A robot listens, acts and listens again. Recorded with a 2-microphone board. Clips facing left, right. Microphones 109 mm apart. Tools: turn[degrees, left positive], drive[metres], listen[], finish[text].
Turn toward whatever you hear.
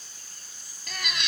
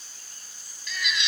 Thought: The baby crying: about 50° left or 130° left.
Action: turn[50]
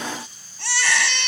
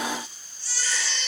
Thought: So it is at 80° left.
Action: turn[80]
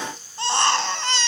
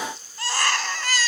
Thought: The baby crying is now 25° left.
Action: turn[25]
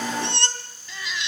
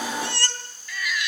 Thought: The baby crying is now 25° left.
Action: turn[25]
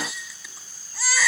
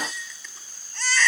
Thought: The baby crying is now 10° left.
Action: turn[10]
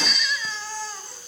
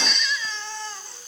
Action: finish[Found it: a baby crying, straight ahead, 2 to 4 m away.]